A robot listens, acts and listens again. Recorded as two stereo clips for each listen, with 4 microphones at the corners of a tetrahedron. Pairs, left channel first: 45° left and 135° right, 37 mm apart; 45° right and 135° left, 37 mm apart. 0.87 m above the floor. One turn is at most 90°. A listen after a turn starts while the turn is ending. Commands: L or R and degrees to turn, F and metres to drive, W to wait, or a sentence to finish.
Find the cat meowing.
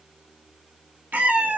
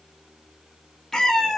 R90
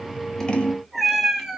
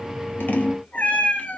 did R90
R65
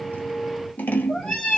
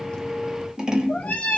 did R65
R10
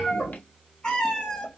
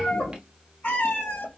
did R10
R10
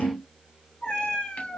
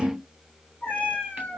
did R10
Facing the cat meowing, 2 to 4 m away.